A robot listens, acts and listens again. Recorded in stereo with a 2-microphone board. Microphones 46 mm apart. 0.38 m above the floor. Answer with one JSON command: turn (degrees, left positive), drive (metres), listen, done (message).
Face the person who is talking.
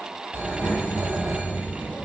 {"turn": 25}
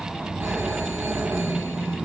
{"done": "Found it: a child speaking, straight ahead, 2 to 4 m away."}